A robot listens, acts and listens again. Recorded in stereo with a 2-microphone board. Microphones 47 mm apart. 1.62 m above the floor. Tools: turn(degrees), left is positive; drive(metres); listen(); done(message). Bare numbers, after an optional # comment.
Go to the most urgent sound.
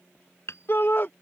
# The shout: about 45° left or 135° left.
turn(45)
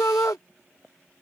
# So it is at 90° left.
turn(90)
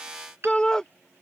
# The shout is now 15° left.
turn(15)
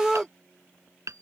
drive(1.0)
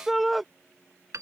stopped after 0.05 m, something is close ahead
done("Blocked. The shout is further on, straight ahead.")